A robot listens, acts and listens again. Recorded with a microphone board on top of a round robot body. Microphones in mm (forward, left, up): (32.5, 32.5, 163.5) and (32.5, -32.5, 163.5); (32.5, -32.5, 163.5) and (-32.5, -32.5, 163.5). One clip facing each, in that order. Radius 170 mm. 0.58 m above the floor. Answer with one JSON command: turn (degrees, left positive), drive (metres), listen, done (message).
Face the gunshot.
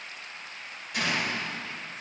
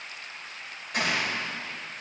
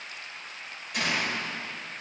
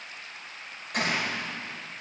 {"turn": -140}
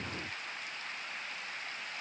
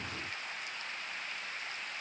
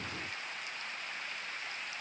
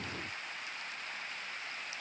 {"done": "Facing where the gunshot came from. I can't hear it now."}